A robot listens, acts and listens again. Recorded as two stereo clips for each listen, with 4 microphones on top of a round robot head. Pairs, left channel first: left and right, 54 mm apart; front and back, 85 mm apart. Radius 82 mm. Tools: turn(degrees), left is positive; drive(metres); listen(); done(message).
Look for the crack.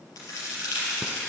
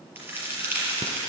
turn(degrees=115)
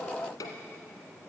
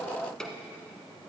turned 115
done("Facing where the crack came from. I can't hear it now.")